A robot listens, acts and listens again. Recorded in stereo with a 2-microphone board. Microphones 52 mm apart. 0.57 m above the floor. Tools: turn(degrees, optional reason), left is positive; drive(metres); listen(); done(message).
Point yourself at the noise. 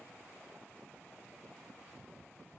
listen()
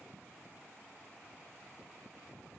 listen()
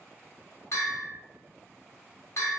turn(degrees=65, reason="The bell: about 65° left or 115° left.")
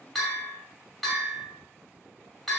done("Facing the bell, 1 to 2 m away.")